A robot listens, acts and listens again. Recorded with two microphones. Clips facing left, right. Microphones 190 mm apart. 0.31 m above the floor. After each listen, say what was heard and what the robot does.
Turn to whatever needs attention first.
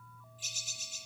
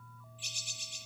Keep listening.
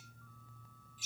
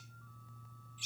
Keep listening.
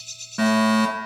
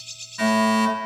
The fire alarm: about 70° left or 110° left. Turn 70° left.
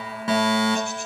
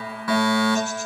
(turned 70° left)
So it is at 25° left. Turn 25° left.
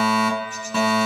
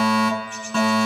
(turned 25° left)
Found it: a fire alarm, straight ahead, over 4 m away.